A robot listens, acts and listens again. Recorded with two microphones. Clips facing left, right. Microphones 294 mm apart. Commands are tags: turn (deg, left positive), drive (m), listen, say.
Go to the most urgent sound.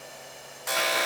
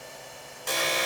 <turn deg="-40"/>
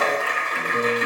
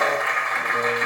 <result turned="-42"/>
<listen/>
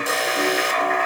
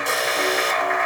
<drive m="1.0"/>
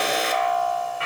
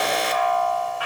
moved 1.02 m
<drive m="1.0"/>
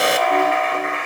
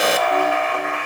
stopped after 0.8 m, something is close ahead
<say>I am next to the alarm.</say>